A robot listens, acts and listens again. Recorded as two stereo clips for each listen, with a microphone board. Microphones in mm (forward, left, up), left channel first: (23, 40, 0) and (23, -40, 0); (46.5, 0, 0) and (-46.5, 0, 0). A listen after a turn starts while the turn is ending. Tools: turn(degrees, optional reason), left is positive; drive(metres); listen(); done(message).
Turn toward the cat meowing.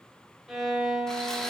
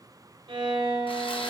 listen()
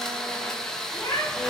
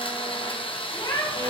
turn(degrees=35, reason="The cat meowing: 35° left.")
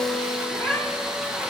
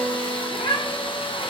turn(degrees=10, reason="The cat meowing is now 10° left.")
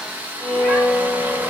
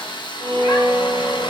listen()
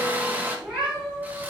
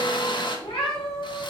turn(degrees=-15, reason="The cat meowing is now 15° right.")
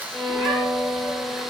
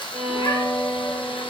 listen()
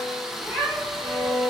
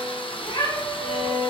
done("Found it: a cat meowing, straight ahead.")